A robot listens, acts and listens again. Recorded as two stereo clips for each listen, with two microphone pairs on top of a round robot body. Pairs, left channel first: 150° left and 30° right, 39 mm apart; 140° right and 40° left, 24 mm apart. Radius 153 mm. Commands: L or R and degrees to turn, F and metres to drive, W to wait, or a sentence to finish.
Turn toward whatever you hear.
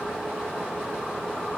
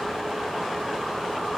W
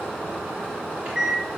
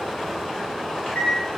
R100
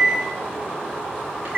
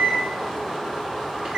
Facing the microwave.